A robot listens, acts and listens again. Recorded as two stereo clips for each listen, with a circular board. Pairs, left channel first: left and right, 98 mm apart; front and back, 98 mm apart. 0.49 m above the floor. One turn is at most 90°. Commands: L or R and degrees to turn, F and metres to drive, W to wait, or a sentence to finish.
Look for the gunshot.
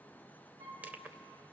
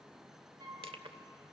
W
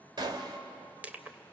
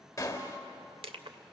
R55
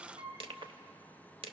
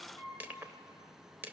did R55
I heard a gunshot from this way, but can't make it out now.